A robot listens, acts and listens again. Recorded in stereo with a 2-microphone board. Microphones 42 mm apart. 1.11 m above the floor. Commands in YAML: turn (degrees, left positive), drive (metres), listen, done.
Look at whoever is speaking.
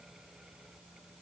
listen: true
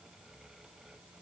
listen: true
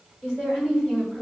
turn: -30
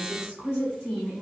turn: 20
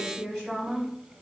done: "Found it: a woman speaking, straight ahead, 2 to 4 m away."